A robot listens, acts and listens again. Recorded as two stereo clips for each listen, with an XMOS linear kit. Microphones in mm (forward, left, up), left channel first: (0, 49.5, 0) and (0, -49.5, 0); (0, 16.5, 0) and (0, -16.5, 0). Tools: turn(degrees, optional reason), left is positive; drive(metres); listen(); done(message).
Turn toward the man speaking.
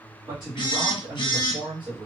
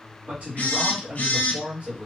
turn(degrees=-50, reason="The man speaking: about 50° right or 130° right.")
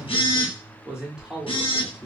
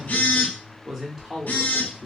done("Facing the man speaking.")